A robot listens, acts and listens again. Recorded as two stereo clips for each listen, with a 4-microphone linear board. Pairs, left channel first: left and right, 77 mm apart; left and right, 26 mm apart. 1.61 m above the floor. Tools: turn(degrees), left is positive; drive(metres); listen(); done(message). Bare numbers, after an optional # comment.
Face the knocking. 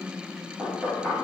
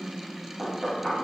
# The knocking: about 15° right or 165° right.
turn(-15)
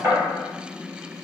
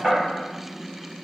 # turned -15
# So it is at 150° right.
turn(-150)
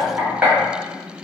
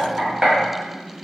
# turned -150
# The knocking is now 15° right.
turn(-15)
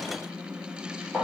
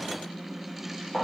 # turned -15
done("Facing the knocking.")